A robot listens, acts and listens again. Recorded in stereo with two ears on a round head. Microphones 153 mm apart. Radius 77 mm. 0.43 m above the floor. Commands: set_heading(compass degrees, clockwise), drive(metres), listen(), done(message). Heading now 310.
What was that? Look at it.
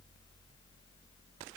listen()
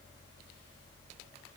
listen()
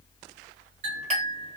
set_heading(355)
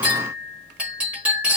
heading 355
set_heading(5)
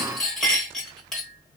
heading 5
done("Found it: a clink, straight ahead.")